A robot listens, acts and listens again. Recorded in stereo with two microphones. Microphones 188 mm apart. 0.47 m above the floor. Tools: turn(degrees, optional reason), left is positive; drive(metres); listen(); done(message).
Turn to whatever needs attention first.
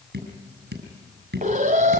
turn(degrees=-45, reason="The alarm: about 45° right or 135° right.")
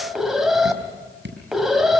done("Facing the alarm.")